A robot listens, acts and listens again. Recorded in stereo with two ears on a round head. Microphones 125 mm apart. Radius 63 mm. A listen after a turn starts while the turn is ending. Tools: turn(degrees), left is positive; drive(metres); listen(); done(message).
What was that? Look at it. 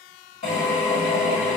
turn(degrees=45)
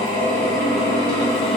done("Found it: a drill, straight ahead, 1 to 2 m away.")